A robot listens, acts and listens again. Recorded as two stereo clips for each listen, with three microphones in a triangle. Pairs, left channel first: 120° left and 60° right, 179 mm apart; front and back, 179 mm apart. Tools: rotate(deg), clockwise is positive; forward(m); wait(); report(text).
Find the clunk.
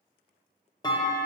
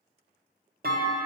rotate(175)
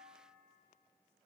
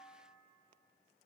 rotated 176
report("I heard a clunk from this way, but can't make it out now.")